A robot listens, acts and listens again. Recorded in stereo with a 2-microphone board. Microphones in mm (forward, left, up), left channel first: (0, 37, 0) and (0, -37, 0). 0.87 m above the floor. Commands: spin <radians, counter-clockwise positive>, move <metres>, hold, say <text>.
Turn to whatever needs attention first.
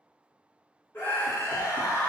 spin 0.52
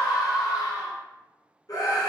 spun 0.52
spin 2.09
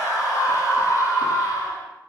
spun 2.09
spin 0.87
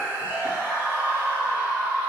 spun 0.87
spin -0.35
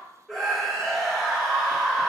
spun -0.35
say Found it: a scream, straight ahead.